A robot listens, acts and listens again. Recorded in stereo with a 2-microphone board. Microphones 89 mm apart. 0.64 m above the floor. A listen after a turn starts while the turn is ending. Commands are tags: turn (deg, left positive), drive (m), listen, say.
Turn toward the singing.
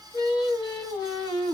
<turn deg="90"/>
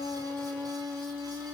<turn deg="-15"/>
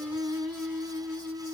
<say>Found it: singing, straight ahead.</say>